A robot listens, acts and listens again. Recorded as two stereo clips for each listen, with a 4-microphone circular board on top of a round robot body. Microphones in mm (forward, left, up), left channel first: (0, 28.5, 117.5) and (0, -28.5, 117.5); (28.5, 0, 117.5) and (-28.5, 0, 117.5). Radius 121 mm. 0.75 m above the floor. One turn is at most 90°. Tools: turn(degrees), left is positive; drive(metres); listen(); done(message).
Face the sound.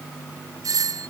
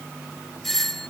turn(degrees=-85)
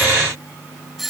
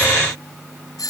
done("Found it: a doorbell, straight ahead.")